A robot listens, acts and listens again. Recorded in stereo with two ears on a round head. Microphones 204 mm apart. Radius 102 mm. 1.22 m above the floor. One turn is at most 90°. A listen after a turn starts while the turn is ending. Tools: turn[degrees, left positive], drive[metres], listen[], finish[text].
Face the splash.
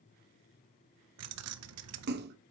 Thought: The splash: about 45° right or 135° right.
Action: turn[-45]
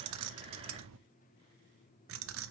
Action: listen[]
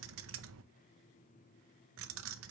Action: finish[I heard a splash, but can't make it out now. It was about straight ahead or 90° right.]